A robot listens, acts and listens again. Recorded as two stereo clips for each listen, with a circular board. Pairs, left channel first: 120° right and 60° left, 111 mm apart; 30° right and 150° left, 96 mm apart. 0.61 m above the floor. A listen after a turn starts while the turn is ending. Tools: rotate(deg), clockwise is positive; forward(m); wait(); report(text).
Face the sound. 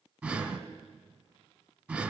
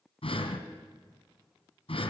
rotate(15)
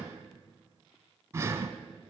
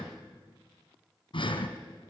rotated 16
report("Facing the breathing.")